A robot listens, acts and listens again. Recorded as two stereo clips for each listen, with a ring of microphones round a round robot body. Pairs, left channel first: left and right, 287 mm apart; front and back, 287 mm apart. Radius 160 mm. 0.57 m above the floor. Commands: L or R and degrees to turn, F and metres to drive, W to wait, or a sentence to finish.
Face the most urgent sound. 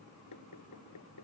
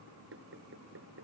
W
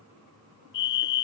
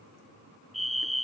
L90
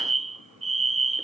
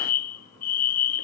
R25
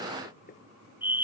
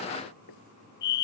Found it: a fire alarm, straight ahead.